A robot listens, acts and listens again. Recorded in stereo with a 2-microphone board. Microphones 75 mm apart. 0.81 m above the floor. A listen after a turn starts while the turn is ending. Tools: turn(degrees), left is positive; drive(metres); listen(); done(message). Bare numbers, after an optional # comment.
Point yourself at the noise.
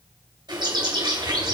turn(-90)
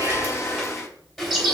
done("Found it: a bird, straight ahead, 2 to 4 m away.")